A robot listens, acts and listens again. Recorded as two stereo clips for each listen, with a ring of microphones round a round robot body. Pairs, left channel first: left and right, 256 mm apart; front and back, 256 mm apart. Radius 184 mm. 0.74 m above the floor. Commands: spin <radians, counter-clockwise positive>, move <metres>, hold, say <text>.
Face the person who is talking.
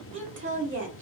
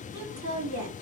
spin -2.27
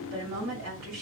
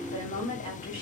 spin -0.87
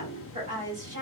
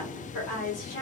spin -0.26
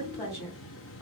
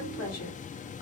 say Found it: a woman speaking, straight ahead.